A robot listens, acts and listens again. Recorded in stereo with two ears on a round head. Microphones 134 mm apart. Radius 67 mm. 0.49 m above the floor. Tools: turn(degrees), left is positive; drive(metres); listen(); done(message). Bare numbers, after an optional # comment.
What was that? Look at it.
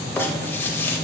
turn(30)
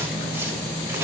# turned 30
# So it is at 15° right.
turn(-15)
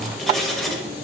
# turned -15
done("Found it: writing, straight ahead.")